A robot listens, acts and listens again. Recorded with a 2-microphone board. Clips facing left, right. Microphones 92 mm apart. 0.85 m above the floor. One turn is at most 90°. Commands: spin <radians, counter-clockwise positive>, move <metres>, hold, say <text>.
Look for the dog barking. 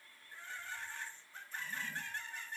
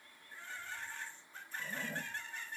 hold
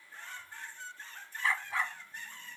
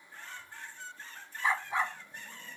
spin -0.35
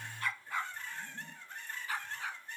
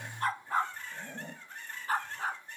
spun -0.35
spin -0.70
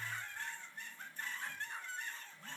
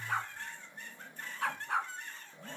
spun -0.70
spin -1.57
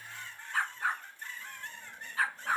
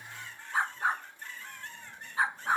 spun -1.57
spin -0.35
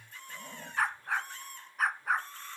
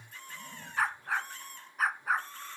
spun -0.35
say Facing the dog barking.